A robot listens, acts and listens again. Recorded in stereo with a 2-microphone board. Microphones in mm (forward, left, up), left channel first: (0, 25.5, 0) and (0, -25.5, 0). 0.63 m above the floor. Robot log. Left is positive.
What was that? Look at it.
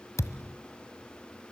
cmd yaw +90
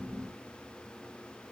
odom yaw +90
end: I heard a thud from this way, but can't make it out now.